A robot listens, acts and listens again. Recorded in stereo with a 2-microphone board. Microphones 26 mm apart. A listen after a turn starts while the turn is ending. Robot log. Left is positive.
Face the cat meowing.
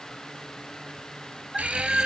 note: The cat meowing: about 15° right or 165° right.
cmd yaw -15
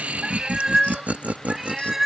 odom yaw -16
note: The cat meowing: about 15° right or 165° right.
cmd yaw -15
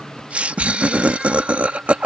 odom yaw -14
cmd idle
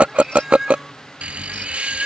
note: The cat meowing: about 15° right or 165° right.
cmd yaw -15
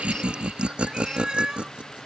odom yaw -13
note: The cat meowing: about 30° right or 150° right.
cmd yaw -30
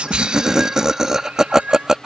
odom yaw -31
note: So it is at 120° right.
cmd yaw -120
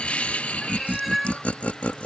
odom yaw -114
end: Facing the cat meowing.